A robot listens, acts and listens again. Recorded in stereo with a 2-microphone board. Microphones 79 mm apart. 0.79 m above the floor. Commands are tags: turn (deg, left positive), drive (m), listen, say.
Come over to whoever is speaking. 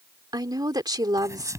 <turn deg="-55"/>
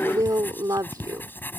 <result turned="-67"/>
<turn deg="-50"/>
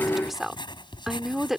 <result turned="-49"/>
<drive m="1.0"/>
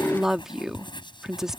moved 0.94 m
<drive m="1.0"/>
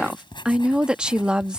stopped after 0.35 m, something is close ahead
<turn deg="-15"/>
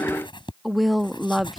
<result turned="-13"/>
<say>I am next to the woman speaking.</say>